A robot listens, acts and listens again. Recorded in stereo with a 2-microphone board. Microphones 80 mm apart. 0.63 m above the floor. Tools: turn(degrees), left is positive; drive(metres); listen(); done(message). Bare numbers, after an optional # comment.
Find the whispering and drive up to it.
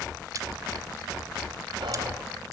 listen()
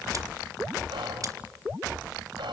# The whispering: about 75° right or 105° right.
turn(-75)
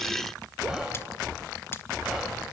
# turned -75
drive(1.0)
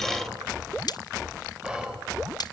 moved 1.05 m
# The whispering is now 10° right.
turn(-10)
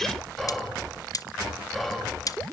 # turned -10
drive(1.0)
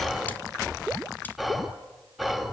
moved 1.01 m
drive(1.0)
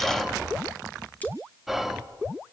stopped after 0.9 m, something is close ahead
done("Arrived at the whispering, straight ahead.")